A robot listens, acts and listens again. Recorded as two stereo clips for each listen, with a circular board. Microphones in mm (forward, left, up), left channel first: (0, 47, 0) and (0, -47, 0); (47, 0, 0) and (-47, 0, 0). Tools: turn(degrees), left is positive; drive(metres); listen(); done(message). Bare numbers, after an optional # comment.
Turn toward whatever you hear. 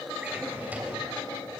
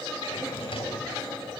# The drawer: 15° right.
turn(-15)
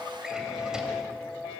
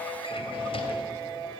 listen()
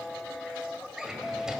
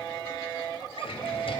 done("Found it: a drawer, straight ahead.")